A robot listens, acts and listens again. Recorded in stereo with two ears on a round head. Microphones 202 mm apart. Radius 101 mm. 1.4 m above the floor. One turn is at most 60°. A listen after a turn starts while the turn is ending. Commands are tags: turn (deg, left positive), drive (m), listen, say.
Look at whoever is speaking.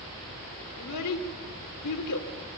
<turn deg="60"/>
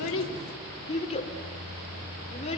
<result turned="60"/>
<turn deg="25"/>
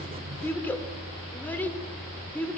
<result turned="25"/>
<turn deg="10"/>
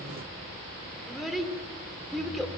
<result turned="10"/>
<say>Facing the child speaking, 2 to 4 m away.</say>